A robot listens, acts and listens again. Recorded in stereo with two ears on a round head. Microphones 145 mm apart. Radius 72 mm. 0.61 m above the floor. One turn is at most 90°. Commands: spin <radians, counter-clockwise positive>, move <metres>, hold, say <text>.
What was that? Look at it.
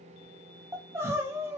spin -0.26
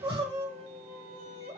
spin -1.57
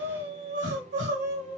spin -1.57
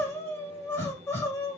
spin 0.26
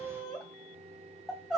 say Facing the crying.